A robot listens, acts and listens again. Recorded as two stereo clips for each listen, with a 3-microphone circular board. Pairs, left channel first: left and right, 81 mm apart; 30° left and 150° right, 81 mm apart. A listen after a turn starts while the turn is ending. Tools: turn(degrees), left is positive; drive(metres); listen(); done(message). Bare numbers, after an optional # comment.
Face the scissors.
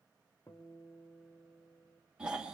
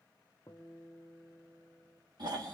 listen()
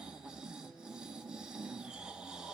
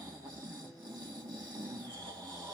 listen()
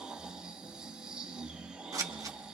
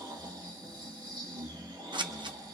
# The scissors: 135° right.
turn(-135)
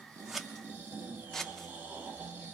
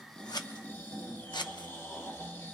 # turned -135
done("Facing the scissors.")